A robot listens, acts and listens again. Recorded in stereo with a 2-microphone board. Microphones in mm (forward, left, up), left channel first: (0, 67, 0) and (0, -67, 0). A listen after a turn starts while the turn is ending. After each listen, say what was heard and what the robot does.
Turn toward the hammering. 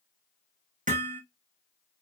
Turn 90° right.
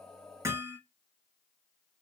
So it is at 20° right. Turn 20° right.
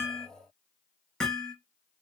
Found it: hammering, straight ahead, 1 to 2 m away.